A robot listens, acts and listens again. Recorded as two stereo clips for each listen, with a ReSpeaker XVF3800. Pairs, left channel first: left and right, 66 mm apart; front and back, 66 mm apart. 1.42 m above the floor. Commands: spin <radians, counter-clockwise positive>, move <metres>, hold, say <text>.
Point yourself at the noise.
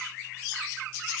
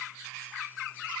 hold
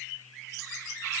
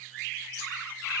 hold
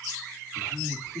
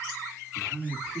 spin -1.92
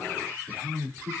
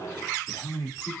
spin -0.61
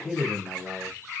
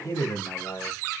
spin -0.17
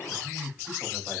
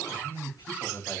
say Found it: a man speaking, straight ahead.